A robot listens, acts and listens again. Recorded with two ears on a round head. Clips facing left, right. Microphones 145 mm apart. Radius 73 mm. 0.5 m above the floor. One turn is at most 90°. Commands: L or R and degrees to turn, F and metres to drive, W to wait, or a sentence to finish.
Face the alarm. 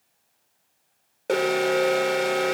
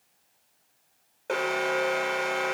L40
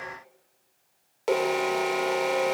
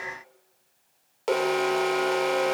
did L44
Found it: an alarm, straight ahead, under 1 m away.